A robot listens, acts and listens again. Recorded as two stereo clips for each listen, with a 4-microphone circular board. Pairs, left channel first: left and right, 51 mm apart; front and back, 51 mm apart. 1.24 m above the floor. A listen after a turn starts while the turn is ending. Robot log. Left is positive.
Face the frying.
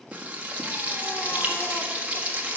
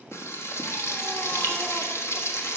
note: The frying: 30° right.
cmd yaw -30
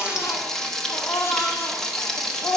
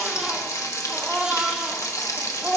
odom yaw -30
note: The frying is now 10° left.
cmd yaw +10
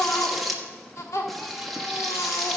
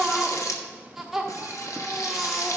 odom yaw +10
end: Facing the frying, 1 to 2 m away.